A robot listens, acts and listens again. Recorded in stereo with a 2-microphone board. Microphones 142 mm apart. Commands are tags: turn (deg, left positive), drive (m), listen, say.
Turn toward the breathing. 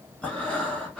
<turn deg="30"/>
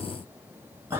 <turn deg="-20"/>
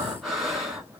<say>Facing the breathing, 1 to 2 m away.</say>